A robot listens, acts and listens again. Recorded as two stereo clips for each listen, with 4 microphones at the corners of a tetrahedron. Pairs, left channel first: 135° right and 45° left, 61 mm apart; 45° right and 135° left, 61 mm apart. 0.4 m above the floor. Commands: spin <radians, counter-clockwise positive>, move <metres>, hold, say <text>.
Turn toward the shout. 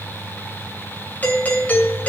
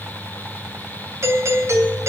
hold
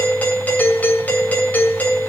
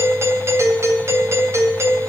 hold
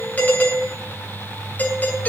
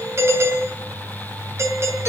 say I can't make out a shout, only a doorbell.